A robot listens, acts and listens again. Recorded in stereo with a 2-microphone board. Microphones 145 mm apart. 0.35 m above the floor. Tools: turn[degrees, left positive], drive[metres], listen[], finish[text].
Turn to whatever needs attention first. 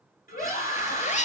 Thought: The scream: about 70° left or 110° left.
Action: turn[70]
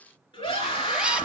Thought: So it is at 35° left.
Action: turn[35]
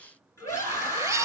Thought: The scream is now 20° left.
Action: turn[20]
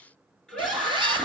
Action: finish[Facing the scream, over 4 m away.]